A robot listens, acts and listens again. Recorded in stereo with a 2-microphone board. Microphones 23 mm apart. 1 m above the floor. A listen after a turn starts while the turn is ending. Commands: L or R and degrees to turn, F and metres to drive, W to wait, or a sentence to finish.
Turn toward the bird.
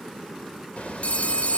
L55
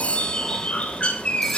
L60
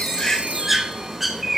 Facing the bird, 1 to 2 m away.